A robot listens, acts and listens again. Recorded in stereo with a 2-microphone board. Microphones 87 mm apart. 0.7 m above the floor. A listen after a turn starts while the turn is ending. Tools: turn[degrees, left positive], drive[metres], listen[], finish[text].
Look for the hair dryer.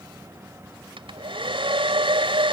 Action: turn[-90]
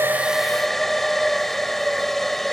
Action: finish[Facing the hair dryer.]